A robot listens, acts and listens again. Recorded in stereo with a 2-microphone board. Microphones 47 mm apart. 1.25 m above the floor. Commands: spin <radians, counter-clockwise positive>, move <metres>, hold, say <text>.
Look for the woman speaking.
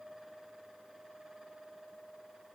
hold
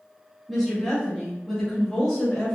spin 0.52
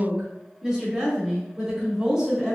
spin -0.26
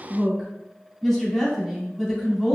say Facing the woman speaking.